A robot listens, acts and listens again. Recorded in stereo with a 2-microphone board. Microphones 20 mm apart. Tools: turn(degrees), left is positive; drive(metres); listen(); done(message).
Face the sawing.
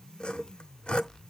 turn(degrees=60)
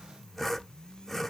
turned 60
done("Found it: sawing, straight ahead.")